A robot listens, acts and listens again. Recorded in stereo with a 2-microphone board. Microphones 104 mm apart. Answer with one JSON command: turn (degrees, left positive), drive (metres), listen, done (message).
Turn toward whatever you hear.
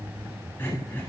{"turn": 20}
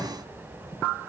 {"listen": true}
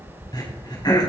{"turn": 135}
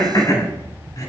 {"turn": 40}
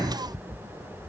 {"listen": true}
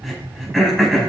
{"done": "Facing the throat clearing."}